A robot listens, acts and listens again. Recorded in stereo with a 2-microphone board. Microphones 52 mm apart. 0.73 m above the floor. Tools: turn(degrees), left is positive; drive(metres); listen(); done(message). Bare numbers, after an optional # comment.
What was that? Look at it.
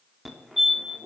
turn(30)
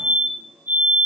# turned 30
# So it is at 35° right.
turn(-35)
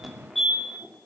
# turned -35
done("Facing the fire alarm, 2 to 4 m away.")